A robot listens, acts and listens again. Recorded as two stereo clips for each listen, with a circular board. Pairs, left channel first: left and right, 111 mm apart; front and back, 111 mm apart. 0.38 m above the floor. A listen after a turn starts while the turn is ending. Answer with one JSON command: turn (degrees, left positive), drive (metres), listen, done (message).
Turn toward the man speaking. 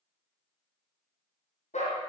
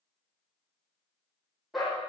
{"listen": true}
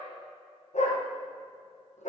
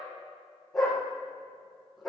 {"listen": true}
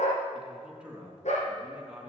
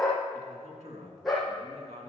{"turn": -170}
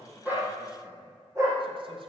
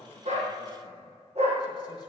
{"listen": true}
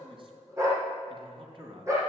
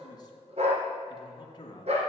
{"turn": -50}
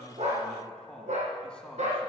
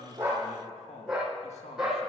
{"turn": 10}
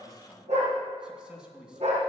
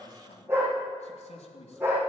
{"done": "Facing the man speaking."}